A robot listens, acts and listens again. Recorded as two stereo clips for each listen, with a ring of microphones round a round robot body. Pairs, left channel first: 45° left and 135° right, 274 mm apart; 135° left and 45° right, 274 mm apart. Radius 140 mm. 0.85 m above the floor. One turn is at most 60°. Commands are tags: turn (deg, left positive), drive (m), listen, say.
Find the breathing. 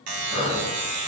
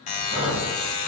<turn deg="-30"/>
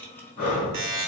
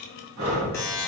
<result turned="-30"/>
<turn deg="-15"/>
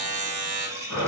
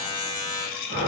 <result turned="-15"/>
<say>Found it: breathing, straight ahead, 1 to 2 m away.</say>